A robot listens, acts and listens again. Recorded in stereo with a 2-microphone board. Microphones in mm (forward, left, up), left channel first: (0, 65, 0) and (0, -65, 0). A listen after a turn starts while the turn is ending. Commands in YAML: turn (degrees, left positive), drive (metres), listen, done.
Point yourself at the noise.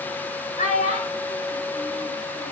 turn: 90
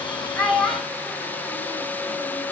done: "Found it: a child speaking, straight ahead, over 4 m away."